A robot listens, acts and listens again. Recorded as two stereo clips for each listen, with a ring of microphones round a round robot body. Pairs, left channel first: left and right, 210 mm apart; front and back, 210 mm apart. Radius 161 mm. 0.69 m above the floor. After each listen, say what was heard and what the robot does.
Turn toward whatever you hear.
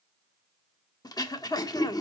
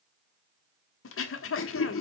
The throat clearing: 15° left. Turn 15° left.
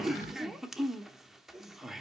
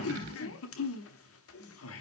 Facing the throat clearing.